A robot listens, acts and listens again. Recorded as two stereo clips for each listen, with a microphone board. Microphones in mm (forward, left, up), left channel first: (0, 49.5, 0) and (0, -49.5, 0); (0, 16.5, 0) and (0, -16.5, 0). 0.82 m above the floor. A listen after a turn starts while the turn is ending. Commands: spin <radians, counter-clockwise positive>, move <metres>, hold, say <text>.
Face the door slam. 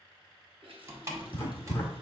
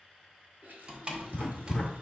spin -0.52
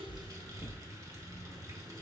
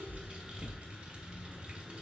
hold
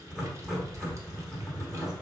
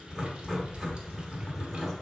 say I heard a door slam, but can't make it out now. It was about straight ahead or 120° right.